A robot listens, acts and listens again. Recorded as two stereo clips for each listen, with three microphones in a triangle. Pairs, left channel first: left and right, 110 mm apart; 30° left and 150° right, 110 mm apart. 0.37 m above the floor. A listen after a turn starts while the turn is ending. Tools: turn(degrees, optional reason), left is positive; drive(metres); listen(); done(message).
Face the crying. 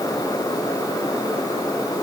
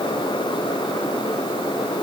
listen()
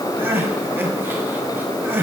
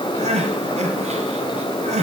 turn(degrees=-165, reason="The crying: 165° right.")
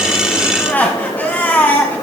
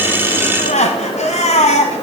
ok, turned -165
turn(degrees=15, reason="The crying is now 15° left.")
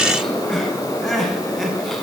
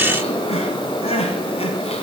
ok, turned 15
done("Found it: crying, straight ahead, 1 to 2 m away.")